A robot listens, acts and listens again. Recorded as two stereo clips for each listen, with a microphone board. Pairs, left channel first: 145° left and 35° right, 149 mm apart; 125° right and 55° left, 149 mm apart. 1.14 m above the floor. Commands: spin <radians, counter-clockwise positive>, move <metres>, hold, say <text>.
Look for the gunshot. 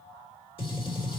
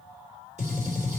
spin 1.66
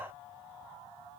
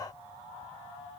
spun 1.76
say Facing where the gunshot came from. I can't hear it now.